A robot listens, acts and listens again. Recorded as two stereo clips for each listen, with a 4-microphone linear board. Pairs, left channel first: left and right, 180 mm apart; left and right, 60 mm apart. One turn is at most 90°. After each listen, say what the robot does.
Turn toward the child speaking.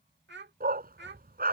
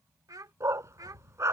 Turn 70° right.
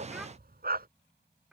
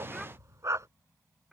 Facing the child speaking.